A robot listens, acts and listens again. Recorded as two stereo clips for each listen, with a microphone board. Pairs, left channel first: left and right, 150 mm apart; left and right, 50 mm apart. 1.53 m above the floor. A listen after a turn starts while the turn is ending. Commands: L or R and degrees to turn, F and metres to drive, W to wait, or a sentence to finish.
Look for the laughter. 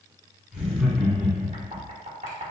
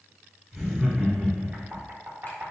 R30
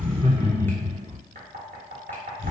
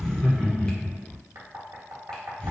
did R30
L25
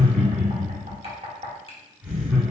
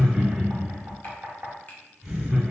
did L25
R10
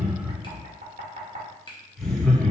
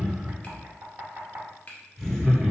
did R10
Found it: laughter, straight ahead, 1 to 2 m away.